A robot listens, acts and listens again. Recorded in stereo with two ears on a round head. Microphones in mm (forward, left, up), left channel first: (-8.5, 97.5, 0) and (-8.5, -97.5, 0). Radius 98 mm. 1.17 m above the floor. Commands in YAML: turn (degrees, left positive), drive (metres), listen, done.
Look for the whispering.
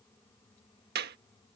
listen: true
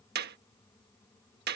listen: true
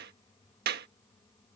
done: "I can't make out whispering, only a clap."